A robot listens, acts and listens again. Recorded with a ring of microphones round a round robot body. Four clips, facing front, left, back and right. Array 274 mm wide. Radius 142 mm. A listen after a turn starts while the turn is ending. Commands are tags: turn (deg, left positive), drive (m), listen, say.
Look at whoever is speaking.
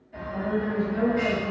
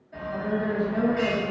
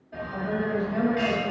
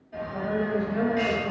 <turn deg="145"/>
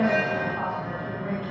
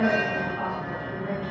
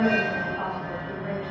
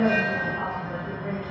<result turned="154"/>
<say>Found it: a woman speaking, straight ahead, 1 to 2 m away.</say>